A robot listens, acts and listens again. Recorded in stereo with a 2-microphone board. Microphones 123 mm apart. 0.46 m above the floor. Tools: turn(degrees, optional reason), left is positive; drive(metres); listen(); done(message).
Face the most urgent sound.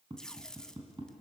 listen()
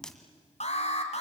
turn(degrees=60, reason="The alarm: about 60° left or 120° left.")
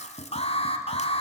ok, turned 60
turn(degrees=55, reason="So it is at 55° left.")
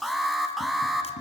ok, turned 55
done("Facing the alarm, 2 to 4 m away.")